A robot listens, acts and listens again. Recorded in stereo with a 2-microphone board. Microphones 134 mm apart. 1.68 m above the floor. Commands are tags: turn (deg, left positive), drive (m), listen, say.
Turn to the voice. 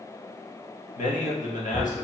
<turn deg="90"/>
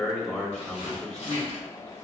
<say>Found it: a man speaking, straight ahead.</say>